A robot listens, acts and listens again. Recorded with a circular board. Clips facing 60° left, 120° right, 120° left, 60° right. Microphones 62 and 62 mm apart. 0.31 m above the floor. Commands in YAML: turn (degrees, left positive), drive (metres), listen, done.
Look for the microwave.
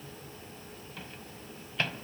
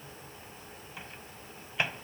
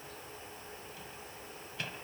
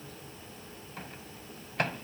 turn: -50
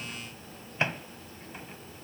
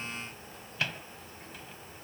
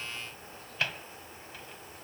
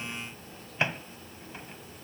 done: "Found it: a microwave, straight ahead."